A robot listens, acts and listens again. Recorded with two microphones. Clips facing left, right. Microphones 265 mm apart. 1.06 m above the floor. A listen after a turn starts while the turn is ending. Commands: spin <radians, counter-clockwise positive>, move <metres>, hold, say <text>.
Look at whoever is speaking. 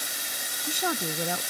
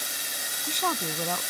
spin 0.52
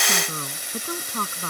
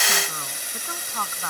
spin 2.44
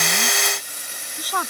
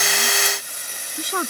spin -0.44
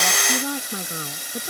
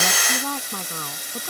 spin 0.26
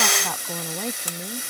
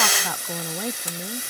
say Found it: a woman speaking, straight ahead.